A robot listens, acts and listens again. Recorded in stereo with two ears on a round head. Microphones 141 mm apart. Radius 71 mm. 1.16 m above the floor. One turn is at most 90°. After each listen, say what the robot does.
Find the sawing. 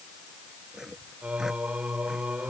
Turn 30° right.
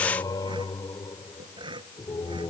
Turn 90° right.
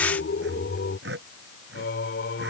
Turn 75° right.
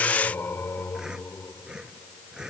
Found it: sawing, straight ahead.